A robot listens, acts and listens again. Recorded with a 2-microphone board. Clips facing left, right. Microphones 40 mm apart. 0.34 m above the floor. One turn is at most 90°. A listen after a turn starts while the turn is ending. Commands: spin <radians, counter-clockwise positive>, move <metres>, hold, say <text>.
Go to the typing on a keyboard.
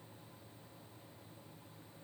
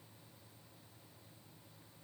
hold
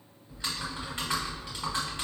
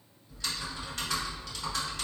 spin 0.44
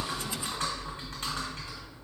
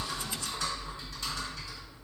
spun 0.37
spin 1.57
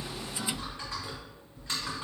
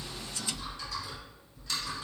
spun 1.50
spin 0.79
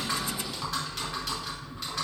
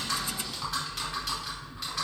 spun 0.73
move 1.0
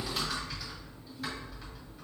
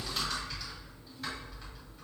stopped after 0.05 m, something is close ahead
say Blocked. The typing on a keyboard is further on, straight ahead.